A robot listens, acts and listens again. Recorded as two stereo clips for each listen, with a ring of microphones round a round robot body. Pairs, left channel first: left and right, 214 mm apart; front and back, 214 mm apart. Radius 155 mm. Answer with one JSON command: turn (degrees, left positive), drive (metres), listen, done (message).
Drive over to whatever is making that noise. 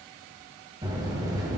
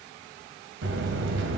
{"turn": -165}
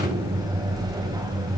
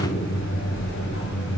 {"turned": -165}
{"turn": -20}
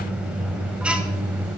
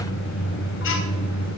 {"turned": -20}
{"drive": 1.0}
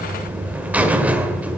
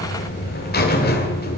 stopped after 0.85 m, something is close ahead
{"turn": -10}
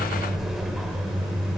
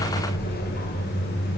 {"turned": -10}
{"done": "I am next to the buzzer."}